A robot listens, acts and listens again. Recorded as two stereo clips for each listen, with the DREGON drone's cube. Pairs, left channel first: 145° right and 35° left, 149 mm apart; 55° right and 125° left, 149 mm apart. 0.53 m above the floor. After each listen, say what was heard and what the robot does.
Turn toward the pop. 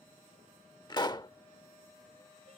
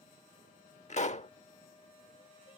The pop: 90° right. Turn 90° right.
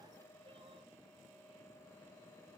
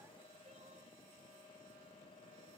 Facing where the pop came from. I can't hear it now.